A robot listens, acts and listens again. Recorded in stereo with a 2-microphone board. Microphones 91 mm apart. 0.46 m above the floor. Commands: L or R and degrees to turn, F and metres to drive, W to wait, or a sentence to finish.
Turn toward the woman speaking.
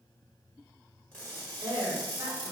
R50
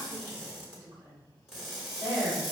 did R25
R40
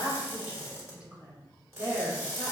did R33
R10
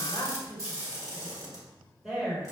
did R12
Found it: a woman speaking, straight ahead, over 4 m away.